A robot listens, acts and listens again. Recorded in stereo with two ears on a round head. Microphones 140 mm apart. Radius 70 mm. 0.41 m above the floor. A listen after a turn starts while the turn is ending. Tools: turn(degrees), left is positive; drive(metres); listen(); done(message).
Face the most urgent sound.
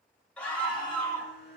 turn(degrees=30)
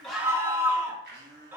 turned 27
turn(degrees=-20)
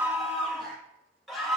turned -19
done("Facing the scream, 1 to 2 m away.")